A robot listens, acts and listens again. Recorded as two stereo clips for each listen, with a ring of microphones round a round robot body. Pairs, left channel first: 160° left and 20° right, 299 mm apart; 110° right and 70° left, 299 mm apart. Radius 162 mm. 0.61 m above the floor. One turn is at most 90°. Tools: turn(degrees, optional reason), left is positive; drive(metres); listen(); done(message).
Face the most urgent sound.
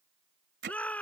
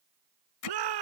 turn(degrees=70, reason="The shout: 70° left.")
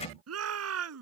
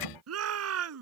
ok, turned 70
turn(degrees=20, reason="The shout is now 20° left.")
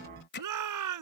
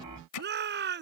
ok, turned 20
turn(degrees=10, reason="The shout is now 10° left.")
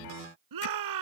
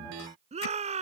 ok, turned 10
done("Found it: a shout, straight ahead.")